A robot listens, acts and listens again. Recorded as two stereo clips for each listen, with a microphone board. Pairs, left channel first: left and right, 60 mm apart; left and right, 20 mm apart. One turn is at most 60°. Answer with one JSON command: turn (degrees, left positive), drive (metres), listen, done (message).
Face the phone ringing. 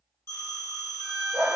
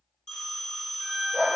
{"turn": 55}
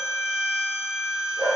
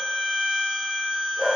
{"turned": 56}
{"listen": true}
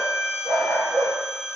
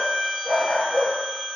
{"turn": 10}
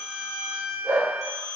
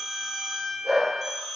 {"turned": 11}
{"done": "Found it: a phone ringing, straight ahead."}